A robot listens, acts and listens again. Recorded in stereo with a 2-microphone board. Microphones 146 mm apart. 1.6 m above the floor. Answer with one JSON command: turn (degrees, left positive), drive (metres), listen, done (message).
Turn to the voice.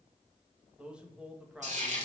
{"turn": -30}
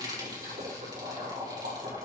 {"listen": true}
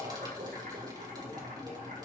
{"listen": true}
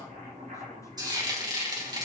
{"done": "I heard a man speaking, but can't make it out now. It was about 25° left or 145° right."}